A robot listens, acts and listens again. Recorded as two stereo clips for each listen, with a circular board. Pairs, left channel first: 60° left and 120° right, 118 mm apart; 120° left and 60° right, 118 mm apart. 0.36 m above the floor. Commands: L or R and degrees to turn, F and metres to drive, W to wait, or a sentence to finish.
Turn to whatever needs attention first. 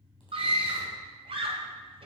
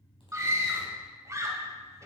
R120
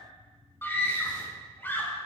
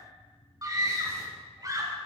R10
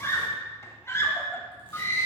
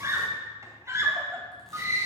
Facing the scream.